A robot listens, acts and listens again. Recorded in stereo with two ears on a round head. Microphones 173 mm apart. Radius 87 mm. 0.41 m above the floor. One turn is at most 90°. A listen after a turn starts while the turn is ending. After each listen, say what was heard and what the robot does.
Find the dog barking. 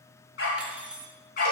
The dog barking: about 45° left or 135° left. Turn 45° left.
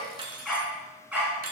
So it is at 10° right. Turn 10° right.
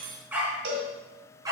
The dog barking is now 20° right. Turn 20° right.
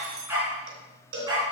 The dog barking is now 20° right. Turn 20° right.
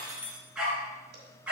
Found it: a dog barking, straight ahead.